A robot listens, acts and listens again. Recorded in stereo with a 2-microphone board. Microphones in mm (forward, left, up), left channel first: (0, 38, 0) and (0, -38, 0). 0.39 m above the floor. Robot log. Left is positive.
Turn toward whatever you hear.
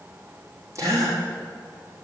note: The gasp: about 40° right or 140° right.
cmd yaw -40
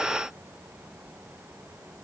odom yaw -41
cmd idle
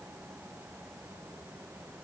end: I heard a gasp, but can't make it out now. It was about straight ahead or 95° right.